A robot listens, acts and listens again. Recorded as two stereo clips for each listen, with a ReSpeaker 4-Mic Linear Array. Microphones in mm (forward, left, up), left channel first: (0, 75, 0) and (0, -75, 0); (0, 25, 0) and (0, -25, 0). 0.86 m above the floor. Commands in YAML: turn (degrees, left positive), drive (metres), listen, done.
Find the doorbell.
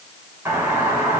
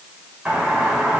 turn: -15
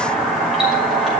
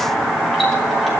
done: "Found it: a doorbell, straight ahead."